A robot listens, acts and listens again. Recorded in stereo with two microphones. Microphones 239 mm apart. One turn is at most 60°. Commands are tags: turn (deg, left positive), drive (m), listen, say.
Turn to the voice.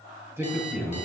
<turn deg="-30"/>
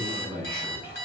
<turn deg="-60"/>
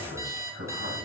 <turn deg="-60"/>
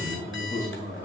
<turn deg="-35"/>
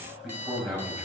<say>Found it: a man speaking, straight ahead, over 4 m away.</say>